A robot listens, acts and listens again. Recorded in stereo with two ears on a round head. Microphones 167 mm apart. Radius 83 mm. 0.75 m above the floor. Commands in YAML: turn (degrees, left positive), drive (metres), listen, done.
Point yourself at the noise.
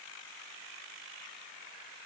listen: true
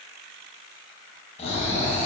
turn: 35
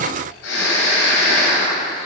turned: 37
turn: 105
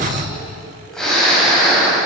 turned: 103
done: "Found it: snoring, straight ahead."